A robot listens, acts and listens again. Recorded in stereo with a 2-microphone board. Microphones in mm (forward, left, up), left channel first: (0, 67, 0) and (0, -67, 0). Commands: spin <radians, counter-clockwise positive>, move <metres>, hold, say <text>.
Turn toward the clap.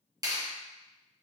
spin -0.44
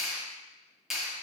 say Found it: a clap, straight ahead.